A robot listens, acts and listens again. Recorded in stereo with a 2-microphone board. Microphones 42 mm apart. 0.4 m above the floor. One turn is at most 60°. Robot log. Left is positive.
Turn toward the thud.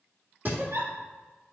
note: The thud: about 45° right or 135° right.
cmd yaw -45
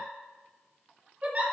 cmd idle
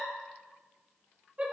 end: I heard a thud, but can't make it out now. It was about straight ahead or 90° right.